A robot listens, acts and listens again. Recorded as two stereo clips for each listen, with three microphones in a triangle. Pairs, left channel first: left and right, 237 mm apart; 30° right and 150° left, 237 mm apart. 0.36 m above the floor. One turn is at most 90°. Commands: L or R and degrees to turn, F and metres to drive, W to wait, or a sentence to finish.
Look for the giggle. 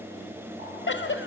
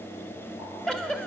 L55
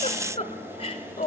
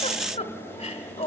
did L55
L25
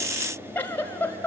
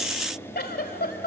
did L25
L10
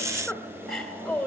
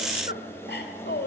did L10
Facing the giggle.